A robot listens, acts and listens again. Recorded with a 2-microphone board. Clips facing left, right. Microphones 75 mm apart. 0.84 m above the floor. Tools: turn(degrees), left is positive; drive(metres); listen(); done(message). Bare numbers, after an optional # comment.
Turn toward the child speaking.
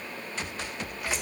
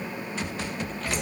listen()
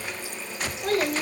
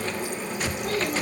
# The child speaking: about 60° left or 120° left.
turn(60)
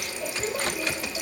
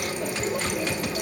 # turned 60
listen()
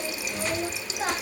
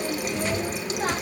done("Facing the child speaking.")